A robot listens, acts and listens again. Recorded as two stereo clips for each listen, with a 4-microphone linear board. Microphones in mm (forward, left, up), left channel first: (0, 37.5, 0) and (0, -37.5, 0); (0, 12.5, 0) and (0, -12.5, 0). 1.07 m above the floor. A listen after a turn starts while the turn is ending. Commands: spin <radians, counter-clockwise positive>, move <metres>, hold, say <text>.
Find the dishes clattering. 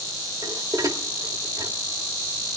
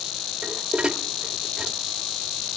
spin -0.87
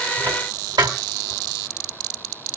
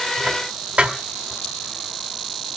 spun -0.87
spin -1.40
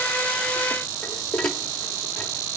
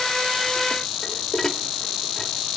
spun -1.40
spin 0.17
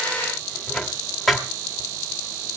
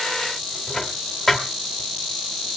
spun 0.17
say Found it: dishes clattering, straight ahead, 1 to 2 m away.